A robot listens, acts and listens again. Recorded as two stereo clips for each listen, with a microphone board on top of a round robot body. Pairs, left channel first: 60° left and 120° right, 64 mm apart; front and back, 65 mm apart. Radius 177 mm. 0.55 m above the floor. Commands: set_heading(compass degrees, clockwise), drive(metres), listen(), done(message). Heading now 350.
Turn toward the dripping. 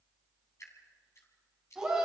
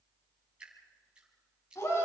set_heading(245)
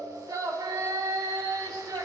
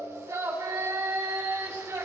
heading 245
listen()
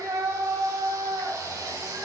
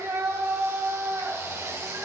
listen()
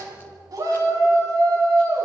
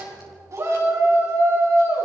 done("I heard dripping from this way, but can't make it out now.")